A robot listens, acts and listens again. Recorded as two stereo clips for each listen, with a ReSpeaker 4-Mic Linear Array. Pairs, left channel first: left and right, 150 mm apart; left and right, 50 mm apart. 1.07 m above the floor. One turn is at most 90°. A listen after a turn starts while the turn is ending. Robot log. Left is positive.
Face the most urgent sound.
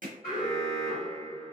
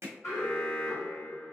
cmd yaw +90
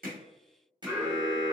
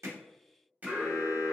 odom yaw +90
end: Found it: an alarm, straight ahead, 1 to 2 m away.